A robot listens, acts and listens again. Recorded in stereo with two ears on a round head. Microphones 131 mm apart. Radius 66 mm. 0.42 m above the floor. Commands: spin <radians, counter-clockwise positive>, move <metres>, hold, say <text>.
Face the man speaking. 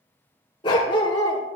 hold
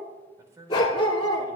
spin -0.35
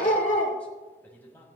spin 0.26
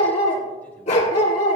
hold
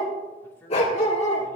spin 0.35
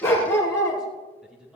say Found it: a man speaking, straight ahead.